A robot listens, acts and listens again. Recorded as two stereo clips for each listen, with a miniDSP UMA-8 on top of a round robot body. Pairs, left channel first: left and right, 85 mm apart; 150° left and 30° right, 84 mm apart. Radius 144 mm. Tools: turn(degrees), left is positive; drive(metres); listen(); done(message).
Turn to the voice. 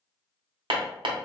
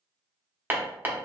listen()
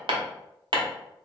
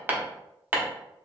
listen()
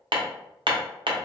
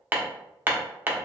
done("I can't make out anyone speaking, only hammering.")